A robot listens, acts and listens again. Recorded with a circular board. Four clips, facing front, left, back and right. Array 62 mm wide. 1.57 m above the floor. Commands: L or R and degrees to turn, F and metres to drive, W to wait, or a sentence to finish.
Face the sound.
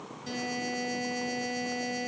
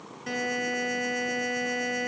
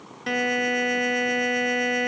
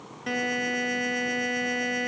R165
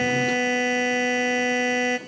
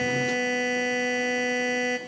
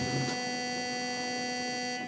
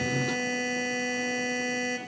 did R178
L10
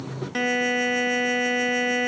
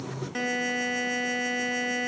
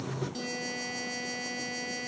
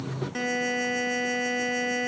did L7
Found it: a buzzer, straight ahead, 2 to 4 m away.